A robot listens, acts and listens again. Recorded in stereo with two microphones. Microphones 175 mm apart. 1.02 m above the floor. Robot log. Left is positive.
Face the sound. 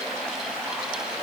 cmd idle
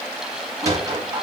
note: The sliding door: about 20° right or 160° right.
cmd yaw -20
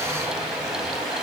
cmd idle
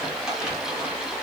cmd idle
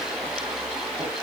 end: I heard a sliding door, but can't make it out now. It was about straight ahead or 140° right.